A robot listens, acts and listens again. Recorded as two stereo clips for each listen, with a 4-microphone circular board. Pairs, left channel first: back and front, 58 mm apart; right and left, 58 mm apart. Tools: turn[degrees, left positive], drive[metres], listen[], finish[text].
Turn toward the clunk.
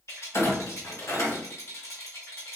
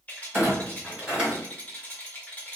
Thought: The clunk: 160° left.
Action: turn[160]
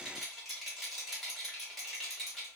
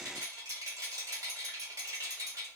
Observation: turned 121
Thought: Nothing new. It was at 35° left.
Action: turn[35]
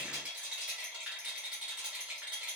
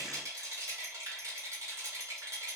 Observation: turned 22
Thought: Nothing new. It was at 15° left.
Action: turn[15]
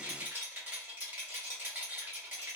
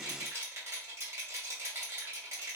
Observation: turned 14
Action: finish[Facing where the clunk came from. I can't hear it now.]